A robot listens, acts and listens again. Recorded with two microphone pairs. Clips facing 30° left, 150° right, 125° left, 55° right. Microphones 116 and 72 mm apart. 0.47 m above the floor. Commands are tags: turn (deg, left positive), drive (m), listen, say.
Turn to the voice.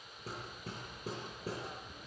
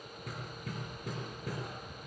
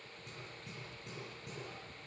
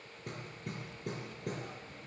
<listen/>
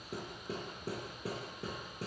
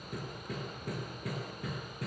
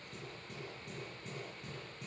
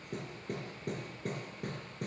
<listen/>
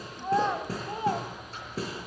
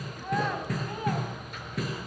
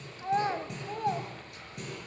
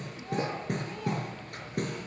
<turn deg="90"/>
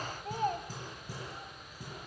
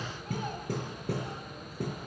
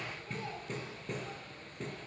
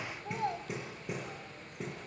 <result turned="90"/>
<turn deg="-15"/>
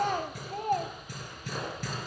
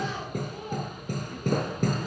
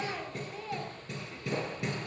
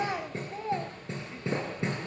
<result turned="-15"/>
<say>Found it: a child speaking, straight ahead, 1 to 2 m away.</say>